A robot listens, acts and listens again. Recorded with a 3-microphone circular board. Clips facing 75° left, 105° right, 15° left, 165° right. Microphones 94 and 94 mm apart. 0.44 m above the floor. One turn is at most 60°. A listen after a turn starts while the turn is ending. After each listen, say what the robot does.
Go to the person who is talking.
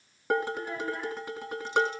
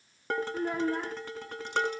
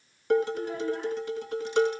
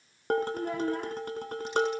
Turn 60° right.
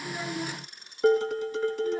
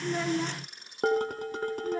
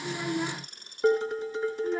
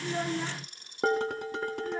Turn 60° right.
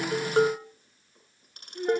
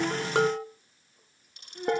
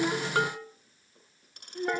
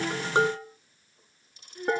Turn 15° right.
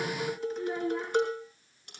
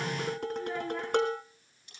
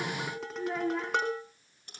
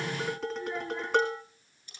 Drive 1.0 m forward.
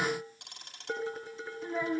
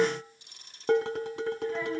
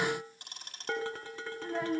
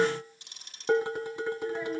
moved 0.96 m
Drive 1.0 m forward.
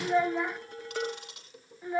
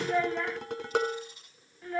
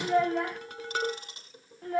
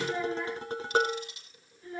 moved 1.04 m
Drive 1.0 m forward.
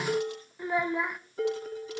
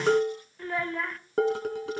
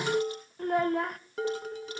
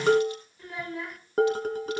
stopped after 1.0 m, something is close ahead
Arrived at the child speaking, straight ahead.